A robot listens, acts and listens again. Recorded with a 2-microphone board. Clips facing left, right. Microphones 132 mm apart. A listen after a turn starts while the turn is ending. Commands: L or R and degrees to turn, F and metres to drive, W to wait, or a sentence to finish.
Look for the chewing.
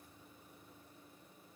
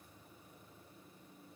W
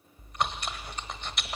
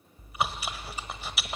R30
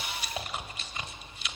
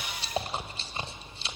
R145
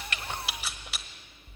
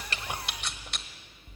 Found it: chewing, straight ahead, 1 to 2 m away.